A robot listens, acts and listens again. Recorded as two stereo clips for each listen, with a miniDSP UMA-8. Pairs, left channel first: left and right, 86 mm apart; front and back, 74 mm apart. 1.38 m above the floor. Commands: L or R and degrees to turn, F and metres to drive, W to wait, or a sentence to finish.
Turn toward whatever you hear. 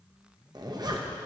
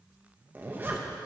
R120
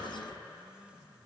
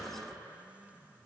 W
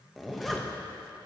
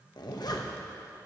Found it: a zipper, straight ahead.